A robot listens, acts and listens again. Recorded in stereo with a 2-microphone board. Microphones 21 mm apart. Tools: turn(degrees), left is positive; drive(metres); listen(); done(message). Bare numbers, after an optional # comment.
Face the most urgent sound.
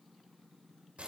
listen()
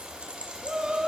# The shout: about 40° right or 140° right.
turn(-40)
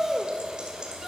done("Found it: a shout, straight ahead, 1 to 2 m away.")